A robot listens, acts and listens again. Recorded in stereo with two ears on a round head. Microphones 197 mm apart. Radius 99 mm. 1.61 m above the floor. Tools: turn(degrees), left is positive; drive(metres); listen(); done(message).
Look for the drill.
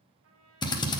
turn(degrees=20)
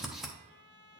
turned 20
done("Found it: a drill, straight ahead.")